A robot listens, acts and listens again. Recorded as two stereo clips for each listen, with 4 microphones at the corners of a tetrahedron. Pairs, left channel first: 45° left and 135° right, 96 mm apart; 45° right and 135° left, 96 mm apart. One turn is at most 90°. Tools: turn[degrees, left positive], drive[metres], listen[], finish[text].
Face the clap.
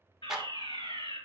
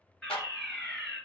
Thought: The clap: 50° right.
Action: turn[-50]
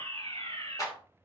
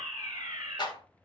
Action: finish[Facing the clap, 2 to 4 m away.]